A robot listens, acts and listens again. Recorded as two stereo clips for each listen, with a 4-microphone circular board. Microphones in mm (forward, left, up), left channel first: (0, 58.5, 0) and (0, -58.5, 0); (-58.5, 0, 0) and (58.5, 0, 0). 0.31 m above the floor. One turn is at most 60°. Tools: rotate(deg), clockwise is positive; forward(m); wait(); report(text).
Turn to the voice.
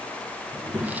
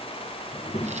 rotate(60)
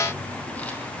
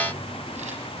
rotate(60)
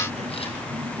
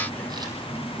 rotate(60)
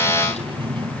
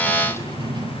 rotate(45)
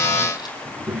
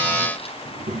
rotate(15)
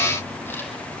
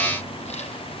wait()
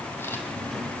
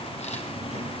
report("Facing the child speaking.")